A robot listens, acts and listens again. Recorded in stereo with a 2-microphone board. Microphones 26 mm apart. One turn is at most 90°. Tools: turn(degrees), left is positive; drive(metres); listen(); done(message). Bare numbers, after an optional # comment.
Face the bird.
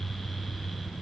listen()
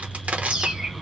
# The bird: about 30° right or 150° right.
turn(-30)
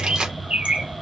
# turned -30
# So it is at 115° right.
turn(-90)
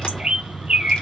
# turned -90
# The bird is now 45° right.
turn(-45)
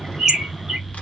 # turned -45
# The bird is now 20° right.
turn(-20)
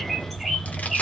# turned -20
done("Facing the bird, 1 to 2 m away.")